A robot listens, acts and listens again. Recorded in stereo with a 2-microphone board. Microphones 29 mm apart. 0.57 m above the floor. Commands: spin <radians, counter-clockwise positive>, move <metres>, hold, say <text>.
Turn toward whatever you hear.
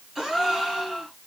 spin -0.52
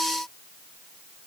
hold
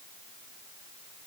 say I heard a gasp, but can't make it out now. It was about 20° left or 140° right.